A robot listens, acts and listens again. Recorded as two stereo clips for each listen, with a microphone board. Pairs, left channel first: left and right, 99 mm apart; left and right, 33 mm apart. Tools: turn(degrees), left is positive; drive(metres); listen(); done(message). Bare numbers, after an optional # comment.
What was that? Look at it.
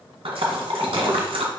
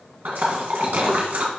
turn(-90)
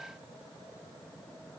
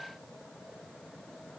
done("Facing where the splash came from. I can't hear it now.")